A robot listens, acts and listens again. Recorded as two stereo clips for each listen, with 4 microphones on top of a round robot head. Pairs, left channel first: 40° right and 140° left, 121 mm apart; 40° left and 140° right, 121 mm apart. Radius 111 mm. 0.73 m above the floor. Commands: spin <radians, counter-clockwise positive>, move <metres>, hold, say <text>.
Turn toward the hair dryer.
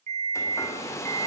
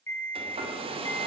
spin -1.83
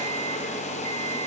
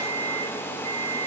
spin -0.61
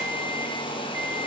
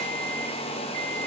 say Found it: a hair dryer, straight ahead, 2 to 4 m away.